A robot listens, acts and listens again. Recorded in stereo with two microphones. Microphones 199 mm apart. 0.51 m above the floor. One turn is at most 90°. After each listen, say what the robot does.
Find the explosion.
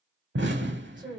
Turn 90° right.
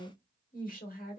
Facing where the explosion came from. I can't hear it now.